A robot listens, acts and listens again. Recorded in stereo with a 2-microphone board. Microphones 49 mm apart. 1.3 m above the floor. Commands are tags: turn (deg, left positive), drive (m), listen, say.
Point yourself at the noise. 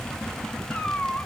<turn deg="35"/>
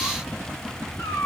<turn deg="110"/>
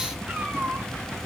<turn deg="-25"/>
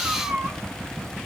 <turn deg="-15"/>
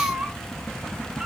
<turn deg="-10"/>
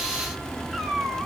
<say>Facing the cat meowing.</say>